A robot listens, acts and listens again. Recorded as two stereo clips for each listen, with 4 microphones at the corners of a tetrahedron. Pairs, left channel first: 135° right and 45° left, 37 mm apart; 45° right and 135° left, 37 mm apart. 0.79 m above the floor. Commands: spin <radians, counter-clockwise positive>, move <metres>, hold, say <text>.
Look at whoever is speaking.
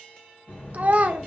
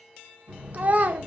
spin 1.57
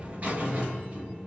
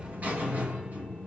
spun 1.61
hold
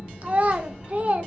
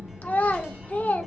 hold
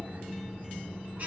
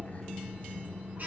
say Facing where the child speaking came from. I can't hear it now.